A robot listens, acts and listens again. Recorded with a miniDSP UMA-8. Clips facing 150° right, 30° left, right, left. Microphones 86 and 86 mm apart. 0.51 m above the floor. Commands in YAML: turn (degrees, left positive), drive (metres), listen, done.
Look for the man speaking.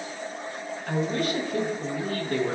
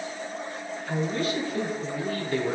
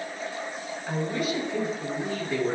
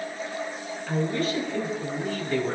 turn: -175
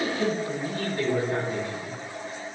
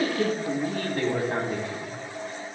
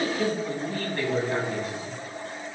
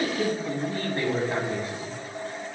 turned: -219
turn: 30
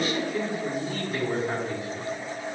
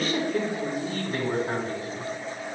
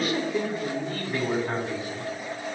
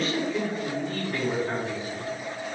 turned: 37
turn: -15
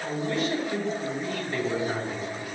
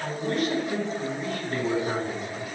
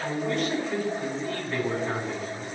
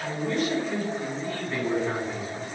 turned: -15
done: "Facing the man speaking, over 4 m away."